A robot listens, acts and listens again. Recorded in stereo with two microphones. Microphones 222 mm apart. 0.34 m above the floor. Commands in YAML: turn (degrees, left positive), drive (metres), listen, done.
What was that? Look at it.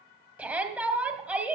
turn: -30
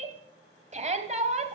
turn: -145
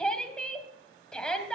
done: "Facing the shout."